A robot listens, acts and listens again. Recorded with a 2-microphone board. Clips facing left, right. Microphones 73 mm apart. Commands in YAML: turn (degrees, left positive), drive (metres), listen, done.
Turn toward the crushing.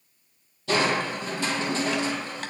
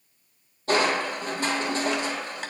turn: -40
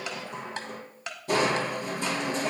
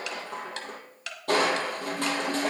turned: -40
turn: -100
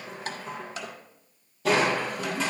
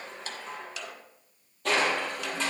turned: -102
done: "Found it: crushing, straight ahead, 1 to 2 m away."